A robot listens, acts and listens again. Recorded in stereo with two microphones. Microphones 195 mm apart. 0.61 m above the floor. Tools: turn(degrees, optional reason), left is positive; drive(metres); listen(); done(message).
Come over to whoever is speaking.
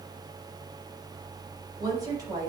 turn(degrees=-20, reason="The woman speaking: about 20° right or 160° right.")
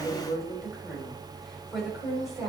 drive(metres=1.0)
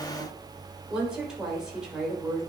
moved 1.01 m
drive(metres=1.0)
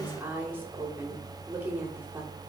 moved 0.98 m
turn(degrees=-10, reason="The woman speaking is now 10° right.")
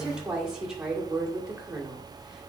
drive(metres=1.0)
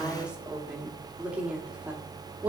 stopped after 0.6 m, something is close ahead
turn(degrees=-10, reason="The woman speaking is now 10° right.")
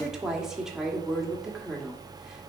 done("I am next to the woman speaking.")